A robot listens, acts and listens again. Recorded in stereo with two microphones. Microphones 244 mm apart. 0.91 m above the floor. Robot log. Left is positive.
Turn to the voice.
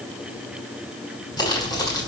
cmd idle
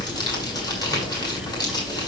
cmd idle
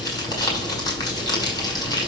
end: I can't make out anyone speaking to turn to.